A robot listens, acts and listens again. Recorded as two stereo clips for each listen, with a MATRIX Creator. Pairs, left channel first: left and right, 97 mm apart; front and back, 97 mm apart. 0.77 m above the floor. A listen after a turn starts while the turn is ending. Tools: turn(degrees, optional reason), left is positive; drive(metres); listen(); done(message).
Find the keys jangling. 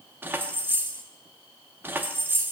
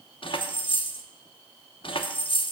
turn(degrees=-20, reason="The keys jangling: 20° right.")
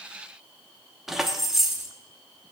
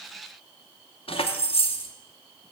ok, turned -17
done("Found it: keys jangling, straight ahead, under 1 m away.")